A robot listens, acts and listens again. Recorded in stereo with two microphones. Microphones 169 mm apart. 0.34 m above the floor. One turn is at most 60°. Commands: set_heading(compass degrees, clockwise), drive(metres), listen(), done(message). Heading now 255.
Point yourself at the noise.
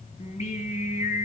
set_heading(210)
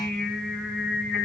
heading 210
done("Facing the singing.")